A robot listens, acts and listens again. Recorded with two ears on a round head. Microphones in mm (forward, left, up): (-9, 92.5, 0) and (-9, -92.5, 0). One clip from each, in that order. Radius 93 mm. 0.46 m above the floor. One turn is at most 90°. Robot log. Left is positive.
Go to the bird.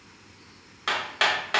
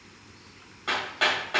cmd idle
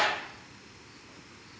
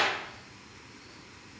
cmd idle
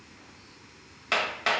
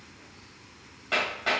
end: I can't make out a bird, only hammering.